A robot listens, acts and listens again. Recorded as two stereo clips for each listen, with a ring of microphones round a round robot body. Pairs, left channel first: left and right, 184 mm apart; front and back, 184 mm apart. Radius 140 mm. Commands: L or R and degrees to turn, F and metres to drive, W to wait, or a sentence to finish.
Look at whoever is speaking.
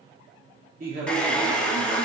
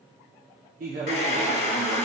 R135
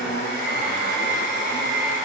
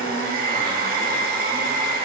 L35
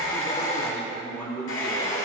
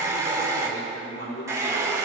L20
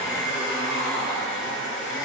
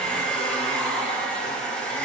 W
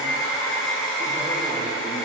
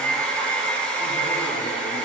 W
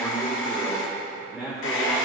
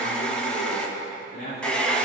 Facing the man speaking.